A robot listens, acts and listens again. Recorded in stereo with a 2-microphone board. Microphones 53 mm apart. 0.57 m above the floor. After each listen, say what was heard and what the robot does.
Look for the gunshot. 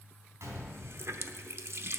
The gunshot: about 70° right or 110° right. Turn 70° right.
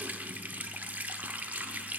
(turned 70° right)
Keep listening.
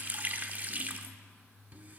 I heard a gunshot, but can't make it out now. It was about straight ahead or 40° right.